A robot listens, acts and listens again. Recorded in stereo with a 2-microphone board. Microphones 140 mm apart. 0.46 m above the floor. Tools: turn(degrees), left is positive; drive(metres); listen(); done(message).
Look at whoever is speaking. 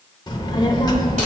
turn(degrees=30)
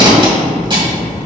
turn(degrees=115)
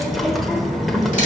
done("Found it: a child speaking, straight ahead.")